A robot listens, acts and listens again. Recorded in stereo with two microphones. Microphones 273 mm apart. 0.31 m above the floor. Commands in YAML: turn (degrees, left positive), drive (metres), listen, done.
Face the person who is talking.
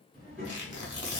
turn: -40
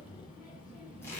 done: "Facing the child speaking, 1 to 2 m away."